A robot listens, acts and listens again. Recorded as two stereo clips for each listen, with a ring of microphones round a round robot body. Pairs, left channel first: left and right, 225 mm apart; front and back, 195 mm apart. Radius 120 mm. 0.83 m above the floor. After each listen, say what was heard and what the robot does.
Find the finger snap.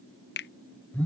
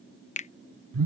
The finger snap: 50° left. Turn 50° left.
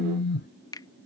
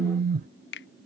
The finger snap is now 15° left. Turn 15° left.
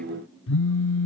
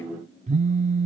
Keep listening.
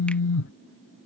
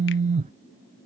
Keep listening.
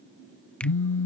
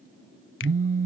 I heard a finger snap from this way, but can't make it out now.